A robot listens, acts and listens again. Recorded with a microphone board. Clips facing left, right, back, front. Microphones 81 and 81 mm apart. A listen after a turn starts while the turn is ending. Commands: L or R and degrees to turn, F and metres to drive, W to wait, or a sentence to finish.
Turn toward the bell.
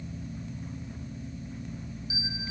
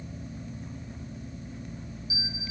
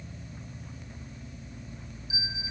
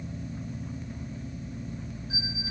L30
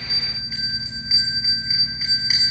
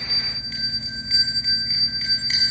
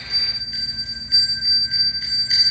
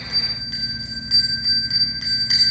L10
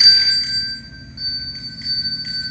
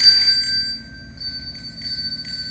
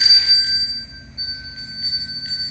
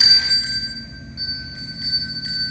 Facing the bell.